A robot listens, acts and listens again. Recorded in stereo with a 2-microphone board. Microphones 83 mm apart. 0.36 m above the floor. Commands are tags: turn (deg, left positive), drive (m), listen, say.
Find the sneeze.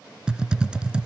<listen/>
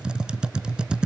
<listen/>
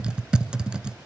<say>I can't make out a sneeze, only typing on a keyboard.</say>